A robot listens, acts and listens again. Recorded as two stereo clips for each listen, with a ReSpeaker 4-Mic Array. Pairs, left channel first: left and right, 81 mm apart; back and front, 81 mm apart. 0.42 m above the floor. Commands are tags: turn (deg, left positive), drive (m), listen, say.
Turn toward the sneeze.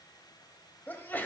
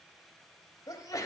<turn deg="150"/>
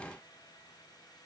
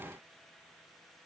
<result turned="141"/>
<turn deg="10"/>
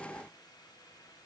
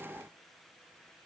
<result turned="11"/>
<say>I heard a sneeze from this way, but can't make it out now.</say>